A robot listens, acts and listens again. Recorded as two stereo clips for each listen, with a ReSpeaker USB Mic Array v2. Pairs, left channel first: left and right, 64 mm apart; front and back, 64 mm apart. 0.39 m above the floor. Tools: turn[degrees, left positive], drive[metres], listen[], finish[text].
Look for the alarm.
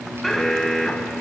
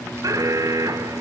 Thought: The alarm: 175° left.
Action: turn[175]
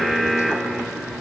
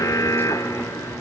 Thought: The alarm is now 10° left.
Action: turn[10]
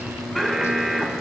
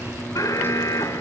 Action: finish[Facing the alarm.]